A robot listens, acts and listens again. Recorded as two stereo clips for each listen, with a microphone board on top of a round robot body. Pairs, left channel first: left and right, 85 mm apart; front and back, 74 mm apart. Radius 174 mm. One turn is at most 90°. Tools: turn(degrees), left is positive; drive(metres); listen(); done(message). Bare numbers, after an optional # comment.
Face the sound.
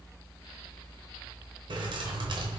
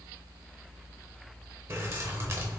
# The keys jangling: 125° right.
turn(-90)
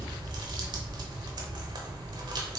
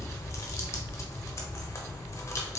# The keys jangling is now 50° right.
turn(-50)
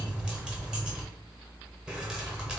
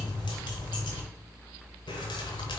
# The keys jangling is now 10° right.
turn(-10)
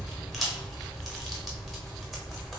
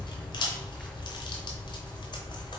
done("Found it: keys jangling, straight ahead, under 1 m away.")